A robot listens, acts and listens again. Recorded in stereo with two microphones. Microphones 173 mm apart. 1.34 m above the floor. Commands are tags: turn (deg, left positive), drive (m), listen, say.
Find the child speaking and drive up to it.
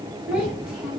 <turn deg="-30"/>
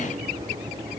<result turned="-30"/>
<listen/>
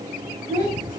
<turn deg="25"/>
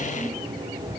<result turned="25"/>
<listen/>
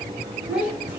<turn deg="-10"/>
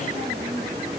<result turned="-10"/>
<listen/>
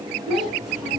<drive m="1.0"/>
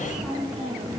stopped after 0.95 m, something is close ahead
<say>Arrived at the child speaking, straight ahead.</say>